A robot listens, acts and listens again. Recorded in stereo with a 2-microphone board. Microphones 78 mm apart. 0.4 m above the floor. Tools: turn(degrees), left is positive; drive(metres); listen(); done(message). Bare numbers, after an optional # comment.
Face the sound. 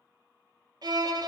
# The violin: about 60° right or 120° right.
turn(-60)
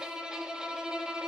# So it is at 10° right.
turn(-10)
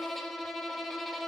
done("Facing the violin, under 1 m away.")